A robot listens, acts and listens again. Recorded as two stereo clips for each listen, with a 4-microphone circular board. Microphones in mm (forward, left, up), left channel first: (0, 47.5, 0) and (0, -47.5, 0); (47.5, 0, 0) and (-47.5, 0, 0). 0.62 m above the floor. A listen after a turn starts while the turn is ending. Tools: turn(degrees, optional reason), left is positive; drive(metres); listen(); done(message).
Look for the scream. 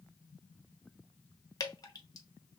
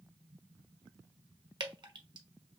listen()
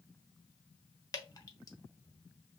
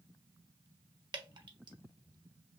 listen()
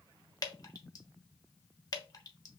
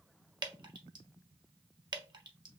done("I can't make out a scream to turn to.")